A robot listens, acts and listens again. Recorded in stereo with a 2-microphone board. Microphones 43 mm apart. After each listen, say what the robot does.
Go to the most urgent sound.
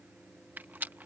Keep listening.
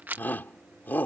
Turn 45° left.
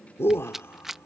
Turn 90° left.
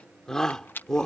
Turn 15° left.
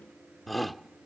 Drive 1.0 m forward.
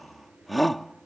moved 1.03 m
Drive 1.0 m forward.
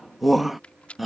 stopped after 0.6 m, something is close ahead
I am next to the shout.